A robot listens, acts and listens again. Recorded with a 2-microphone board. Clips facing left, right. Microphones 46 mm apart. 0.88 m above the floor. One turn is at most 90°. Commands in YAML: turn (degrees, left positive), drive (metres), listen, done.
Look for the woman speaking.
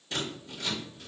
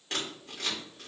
listen: true
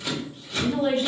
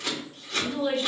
turn: 40
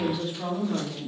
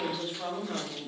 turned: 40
turn: -15
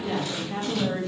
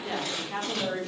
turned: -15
turn: -30
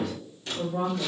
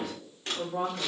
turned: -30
turn: -15
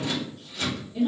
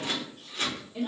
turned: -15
turn: -15
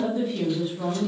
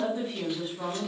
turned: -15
done: "Facing the woman speaking."